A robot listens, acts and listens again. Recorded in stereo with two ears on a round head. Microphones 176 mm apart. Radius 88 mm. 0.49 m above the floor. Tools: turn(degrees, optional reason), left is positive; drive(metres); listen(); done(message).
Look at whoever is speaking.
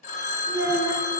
turn(degrees=-70, reason="The child speaking: about 70° right or 110° right.")
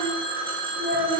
done("Facing the child speaking.")